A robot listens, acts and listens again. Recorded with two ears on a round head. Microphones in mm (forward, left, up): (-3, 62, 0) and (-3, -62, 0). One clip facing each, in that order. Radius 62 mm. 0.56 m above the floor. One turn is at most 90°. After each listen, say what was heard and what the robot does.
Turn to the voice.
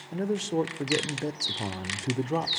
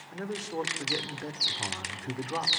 The man speaking: about 30° left or 150° left. Turn 30° left.
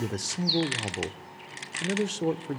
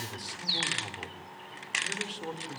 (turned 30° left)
So it is at 115° left. Turn 90° left.
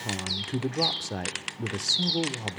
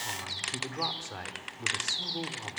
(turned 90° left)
The man speaking is now 45° left. Turn 45° left.
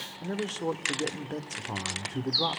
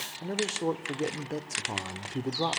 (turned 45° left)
The man speaking is now 10° right. Turn 10° right.
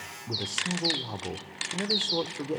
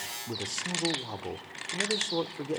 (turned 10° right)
Facing the man speaking.